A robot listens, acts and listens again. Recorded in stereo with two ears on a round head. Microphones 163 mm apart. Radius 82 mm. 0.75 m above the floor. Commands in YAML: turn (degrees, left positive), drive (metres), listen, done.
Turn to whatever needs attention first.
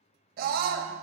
turn: -50
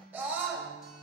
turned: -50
turn: -10
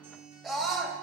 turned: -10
done: "Facing the scream, under 1 m away."